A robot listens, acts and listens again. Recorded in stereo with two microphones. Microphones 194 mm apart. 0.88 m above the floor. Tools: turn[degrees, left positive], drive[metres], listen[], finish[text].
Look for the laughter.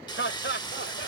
Action: turn[90]
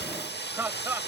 Thought: So it is at 10° right.
Action: turn[-10]
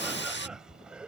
Action: finish[Facing the laughter.]